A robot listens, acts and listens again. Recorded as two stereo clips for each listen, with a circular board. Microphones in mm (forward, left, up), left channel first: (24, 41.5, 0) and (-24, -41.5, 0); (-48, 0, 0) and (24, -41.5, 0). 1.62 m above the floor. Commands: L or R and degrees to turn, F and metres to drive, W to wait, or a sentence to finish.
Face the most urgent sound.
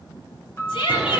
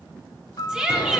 L50
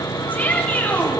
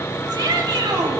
R10
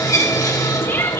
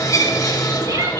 Found it: a shout, straight ahead, 2 to 4 m away.